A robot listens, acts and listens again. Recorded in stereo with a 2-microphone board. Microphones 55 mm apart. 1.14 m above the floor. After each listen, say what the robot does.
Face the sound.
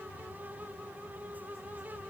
Keep listening.
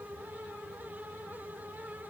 Keep listening.
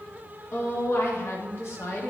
Turn 50° left.
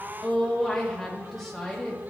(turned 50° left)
Found it: a woman speaking, straight ahead, 1 to 2 m away.